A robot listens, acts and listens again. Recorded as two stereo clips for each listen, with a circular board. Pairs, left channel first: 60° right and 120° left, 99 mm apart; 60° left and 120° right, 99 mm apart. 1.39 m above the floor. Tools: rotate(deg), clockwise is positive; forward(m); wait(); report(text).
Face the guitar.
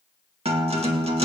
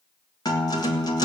rotate(-110)
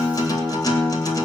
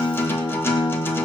report("Found it: a guitar, straight ahead.")